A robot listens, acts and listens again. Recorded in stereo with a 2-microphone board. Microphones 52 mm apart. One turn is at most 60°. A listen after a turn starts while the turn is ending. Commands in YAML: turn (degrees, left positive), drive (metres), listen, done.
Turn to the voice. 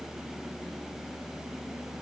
listen: true
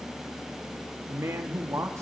turn: -60
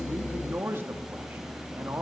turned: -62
turn: -50
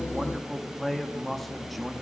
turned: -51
done: "Facing the man speaking, 1 to 2 m away."